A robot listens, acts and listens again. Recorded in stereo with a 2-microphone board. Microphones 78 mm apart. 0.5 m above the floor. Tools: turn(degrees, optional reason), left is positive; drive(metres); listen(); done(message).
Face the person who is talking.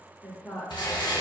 turn(degrees=25, reason="The woman speaking: about 25° left or 155° left.")
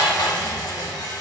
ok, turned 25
listen()
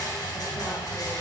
listen()
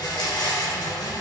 done("I heard a woman speaking, but can't make it out now. It was about straight ahead or 130° left.")